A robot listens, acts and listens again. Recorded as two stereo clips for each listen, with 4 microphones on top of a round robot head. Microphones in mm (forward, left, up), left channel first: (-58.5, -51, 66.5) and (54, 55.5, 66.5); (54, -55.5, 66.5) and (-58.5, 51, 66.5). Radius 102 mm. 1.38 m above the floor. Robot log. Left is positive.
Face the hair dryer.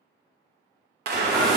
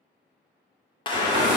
note: The hair dryer: 70° left.
cmd yaw +70
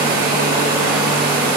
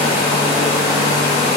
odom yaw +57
note: The hair dryer is now 15° left.
cmd yaw +15
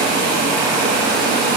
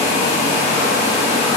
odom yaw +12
end: Found it: a hair dryer, straight ahead.